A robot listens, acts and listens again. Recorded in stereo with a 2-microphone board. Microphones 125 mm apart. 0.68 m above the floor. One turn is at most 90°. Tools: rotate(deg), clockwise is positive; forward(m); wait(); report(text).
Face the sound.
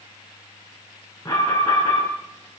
rotate(-25)
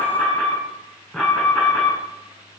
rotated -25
report("Found it: an alarm, straight ahead, over 4 m away.")